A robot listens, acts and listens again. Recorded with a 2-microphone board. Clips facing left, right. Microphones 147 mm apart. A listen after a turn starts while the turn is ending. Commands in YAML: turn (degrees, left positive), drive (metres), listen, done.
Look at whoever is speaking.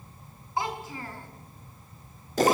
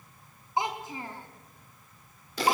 turn: -20
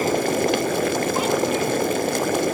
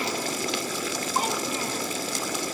listen: true
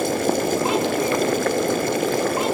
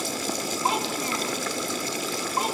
listen: true
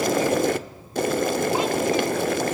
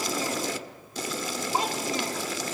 done: "I heard a child speaking, but can't make it out now. It was about straight ahead or 140° right."